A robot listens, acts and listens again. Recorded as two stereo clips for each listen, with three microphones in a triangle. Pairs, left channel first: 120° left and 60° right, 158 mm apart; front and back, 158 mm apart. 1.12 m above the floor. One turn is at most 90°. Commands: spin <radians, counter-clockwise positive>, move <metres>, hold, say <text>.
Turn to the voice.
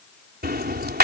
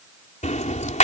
hold
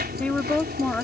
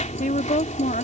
spin 0.61
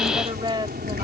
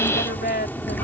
say Found it: a woman speaking, straight ahead.